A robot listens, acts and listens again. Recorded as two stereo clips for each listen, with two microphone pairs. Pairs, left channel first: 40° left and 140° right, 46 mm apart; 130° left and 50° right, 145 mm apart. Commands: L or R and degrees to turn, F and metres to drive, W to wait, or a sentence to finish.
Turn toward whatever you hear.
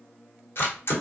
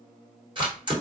L10
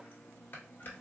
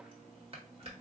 W
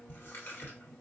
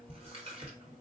Facing the camera shutter.